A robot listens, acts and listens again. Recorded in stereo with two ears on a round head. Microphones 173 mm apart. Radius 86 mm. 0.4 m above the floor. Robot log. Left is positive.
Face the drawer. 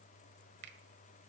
cmd idle
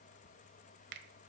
cmd idle
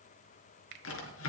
cmd yaw +90
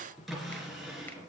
end: Facing the drawer.